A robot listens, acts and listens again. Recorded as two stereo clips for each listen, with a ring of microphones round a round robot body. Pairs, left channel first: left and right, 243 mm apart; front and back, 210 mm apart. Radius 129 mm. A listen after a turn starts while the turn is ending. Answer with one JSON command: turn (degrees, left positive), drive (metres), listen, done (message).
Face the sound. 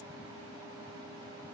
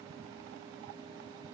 {"listen": true}
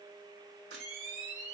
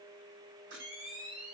{"turn": -140}
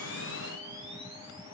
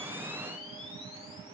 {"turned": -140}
{"listen": true}
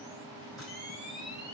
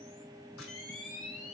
{"done": "Found it: a camera shutter, straight ahead."}